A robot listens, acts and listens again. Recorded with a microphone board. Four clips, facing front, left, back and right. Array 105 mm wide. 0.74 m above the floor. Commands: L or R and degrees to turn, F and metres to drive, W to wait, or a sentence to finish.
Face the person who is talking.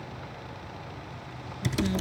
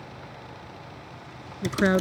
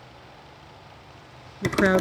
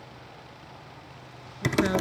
L155
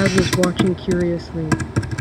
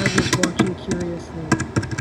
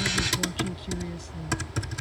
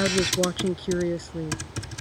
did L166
R10
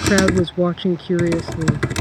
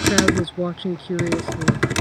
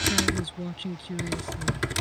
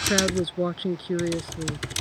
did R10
Facing the woman speaking.